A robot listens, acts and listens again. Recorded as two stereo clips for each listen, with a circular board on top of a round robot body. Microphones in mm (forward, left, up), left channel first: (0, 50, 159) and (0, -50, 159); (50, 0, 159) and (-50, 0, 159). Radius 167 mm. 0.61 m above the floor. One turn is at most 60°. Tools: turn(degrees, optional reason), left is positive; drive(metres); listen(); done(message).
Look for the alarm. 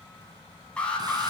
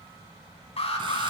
turn(degrees=10, reason="The alarm: 10° left.")
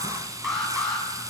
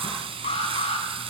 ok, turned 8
done("Facing the alarm, over 4 m away.")